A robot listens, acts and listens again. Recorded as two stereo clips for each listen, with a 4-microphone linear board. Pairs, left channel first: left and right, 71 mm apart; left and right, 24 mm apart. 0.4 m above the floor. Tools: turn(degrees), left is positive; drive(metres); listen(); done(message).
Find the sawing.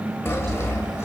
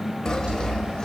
turn(degrees=30)
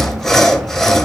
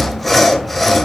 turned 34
done("Found it: sawing, straight ahead, 1 to 2 m away.")